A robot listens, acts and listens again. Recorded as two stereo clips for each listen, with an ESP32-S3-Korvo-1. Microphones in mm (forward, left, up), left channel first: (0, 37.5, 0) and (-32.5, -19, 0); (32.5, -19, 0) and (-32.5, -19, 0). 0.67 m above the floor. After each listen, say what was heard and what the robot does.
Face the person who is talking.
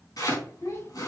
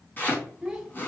The child speaking: 95° left. Turn 95° left.
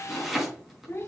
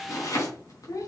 The child speaking is now 20° left. Turn 20° left.
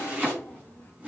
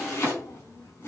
Facing the child speaking.